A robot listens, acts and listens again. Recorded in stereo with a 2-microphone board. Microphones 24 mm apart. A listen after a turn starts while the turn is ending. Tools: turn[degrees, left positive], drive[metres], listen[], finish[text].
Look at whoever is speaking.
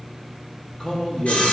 Thought: The man speaking: about 40° left or 140° left.
Action: turn[40]
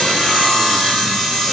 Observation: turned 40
Action: listen[]
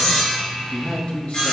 Thought: So it is at 95° left.
Action: turn[95]
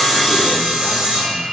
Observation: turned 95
Action: listen[]
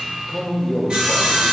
Thought: The man speaking is now 15° left.
Action: turn[15]
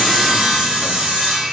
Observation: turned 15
Action: listen[]
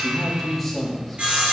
Action: finish[Facing the man speaking.]